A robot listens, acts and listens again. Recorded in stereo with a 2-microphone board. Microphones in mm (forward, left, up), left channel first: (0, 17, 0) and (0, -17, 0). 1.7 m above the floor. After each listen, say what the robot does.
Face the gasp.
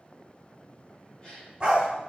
Turn 25° left.
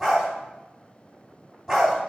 Keep listening.
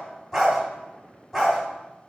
I heard a gasp, but can't make it out now. It was about straight ahead or 130° left.